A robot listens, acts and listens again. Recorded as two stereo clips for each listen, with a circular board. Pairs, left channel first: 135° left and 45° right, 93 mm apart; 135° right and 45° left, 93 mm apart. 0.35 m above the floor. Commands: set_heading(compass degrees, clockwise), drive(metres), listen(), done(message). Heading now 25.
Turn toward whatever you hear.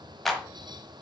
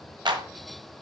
set_heading(340)
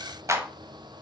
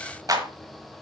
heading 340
done("Facing the clap, 1 to 2 m away.")